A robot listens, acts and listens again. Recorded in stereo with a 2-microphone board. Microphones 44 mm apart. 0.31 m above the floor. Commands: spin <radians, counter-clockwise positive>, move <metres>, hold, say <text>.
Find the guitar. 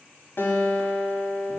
spin 0.87
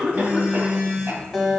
say Facing the guitar.